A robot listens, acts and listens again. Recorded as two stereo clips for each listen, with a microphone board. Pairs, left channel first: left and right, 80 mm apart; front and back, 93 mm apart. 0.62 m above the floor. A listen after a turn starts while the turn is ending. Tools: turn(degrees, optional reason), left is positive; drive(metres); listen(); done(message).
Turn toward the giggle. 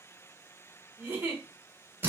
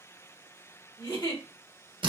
turn(degrees=-30, reason="The giggle: 30° right.")
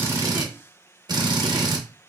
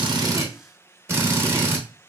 listen()
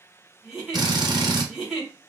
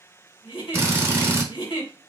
done("Found it: a giggle, straight ahead, 1 to 2 m away.")